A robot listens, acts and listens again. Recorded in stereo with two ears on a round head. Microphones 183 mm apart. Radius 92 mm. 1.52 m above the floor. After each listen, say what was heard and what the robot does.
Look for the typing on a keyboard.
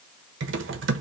The typing on a keyboard: about 65° right or 115° right. Turn 65° right.
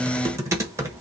So it is at 15° right. Turn 15° right.
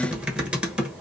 Found it: typing on a keyboard, straight ahead, 1 to 2 m away.